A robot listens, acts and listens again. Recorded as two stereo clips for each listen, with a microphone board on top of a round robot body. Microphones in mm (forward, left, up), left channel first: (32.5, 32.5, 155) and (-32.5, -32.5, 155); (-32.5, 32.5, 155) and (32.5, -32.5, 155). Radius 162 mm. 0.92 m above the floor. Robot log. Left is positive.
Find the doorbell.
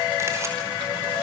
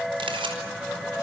cmd idle
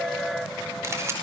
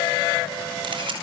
cmd idle
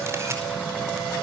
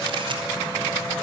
end: I can't make out a doorbell, only a camera shutter.